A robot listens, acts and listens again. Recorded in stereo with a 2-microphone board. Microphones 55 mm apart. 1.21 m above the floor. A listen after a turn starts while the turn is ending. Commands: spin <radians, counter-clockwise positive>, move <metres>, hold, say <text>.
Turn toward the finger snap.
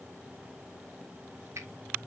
spin -1.05
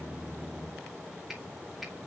say Found it: a finger snap, straight ahead, 2 to 4 m away.